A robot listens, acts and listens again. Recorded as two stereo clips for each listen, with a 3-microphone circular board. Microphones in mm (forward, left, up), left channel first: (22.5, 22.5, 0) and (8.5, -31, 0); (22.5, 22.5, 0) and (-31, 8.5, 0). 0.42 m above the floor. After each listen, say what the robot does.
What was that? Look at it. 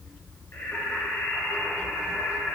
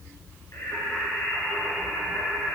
Turn 35° left.
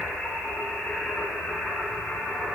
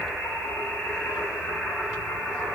Turn 10° left.
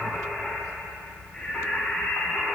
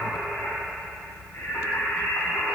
Turn 10° left.
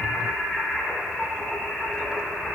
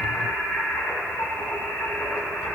Found it: singing, straight ahead.